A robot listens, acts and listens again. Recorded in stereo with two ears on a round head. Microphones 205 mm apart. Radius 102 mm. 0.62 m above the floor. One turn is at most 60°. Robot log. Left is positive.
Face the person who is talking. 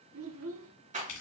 note: The child speaking: about 60° right or 120° right.
cmd yaw -60
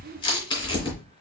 cmd idle
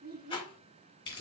note: So it is at 45° right.
cmd yaw -45
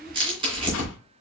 cmd idle
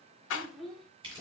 end: Found it: a child speaking, straight ahead, 1 to 2 m away.